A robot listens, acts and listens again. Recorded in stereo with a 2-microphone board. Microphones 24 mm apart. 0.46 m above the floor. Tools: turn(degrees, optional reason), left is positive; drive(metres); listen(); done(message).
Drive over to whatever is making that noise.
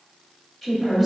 turn(degrees=30)
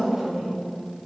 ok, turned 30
turn(degrees=-20, reason="So it is at 20° right.")
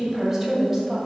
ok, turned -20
drive(metres=1.0)
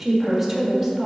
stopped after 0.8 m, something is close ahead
turn(degrees=-10, reason="The woman speaking is now 10° right.")
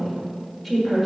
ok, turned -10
done("Arrived at the woman speaking, straight ahead.")